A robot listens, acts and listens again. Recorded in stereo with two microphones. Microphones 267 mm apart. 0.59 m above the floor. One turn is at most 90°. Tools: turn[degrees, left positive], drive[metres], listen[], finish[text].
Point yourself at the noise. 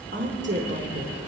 Thought: The woman speaking: about 45° right or 135° right.
Action: turn[-45]
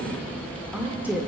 Thought: So it is at 10° right.
Action: turn[-10]
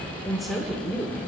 Action: finish[Found it: a woman speaking, straight ahead.]